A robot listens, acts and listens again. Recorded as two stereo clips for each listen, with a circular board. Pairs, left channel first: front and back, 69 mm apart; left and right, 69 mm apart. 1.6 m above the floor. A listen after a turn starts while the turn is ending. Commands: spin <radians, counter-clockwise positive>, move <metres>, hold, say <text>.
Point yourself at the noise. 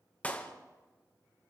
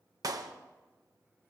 spin -1.13
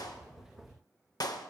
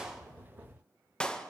spin 0.26
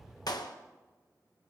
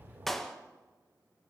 say Found it: a clap, straight ahead.